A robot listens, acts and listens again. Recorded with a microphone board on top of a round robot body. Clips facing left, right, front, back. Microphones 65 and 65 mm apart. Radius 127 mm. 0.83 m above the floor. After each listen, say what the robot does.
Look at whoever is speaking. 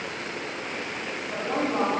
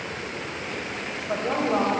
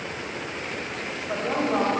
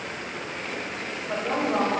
Turn 80° right.
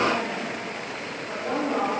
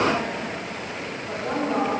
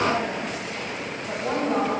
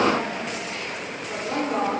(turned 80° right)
Turn 10° right.
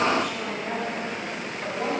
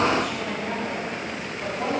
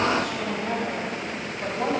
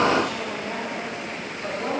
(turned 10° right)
Facing the woman speaking, over 4 m away.